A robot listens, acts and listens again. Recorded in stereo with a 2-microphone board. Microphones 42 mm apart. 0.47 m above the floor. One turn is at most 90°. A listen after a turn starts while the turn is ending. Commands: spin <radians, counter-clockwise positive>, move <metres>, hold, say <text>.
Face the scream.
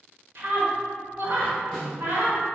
spin -0.96
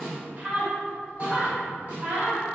spin -0.79
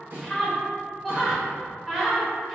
say Facing the scream.